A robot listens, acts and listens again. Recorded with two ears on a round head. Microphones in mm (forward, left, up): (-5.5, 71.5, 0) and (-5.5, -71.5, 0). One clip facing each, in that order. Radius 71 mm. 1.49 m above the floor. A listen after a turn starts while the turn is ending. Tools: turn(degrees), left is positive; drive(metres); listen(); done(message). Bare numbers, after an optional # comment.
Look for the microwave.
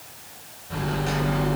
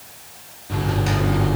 # The microwave: about 70° right or 110° right.
turn(-70)
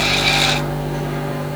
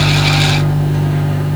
# So it is at 40° right.
turn(-40)
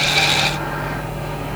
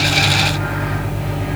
done("Found it: a microwave, straight ahead, over 4 m away.")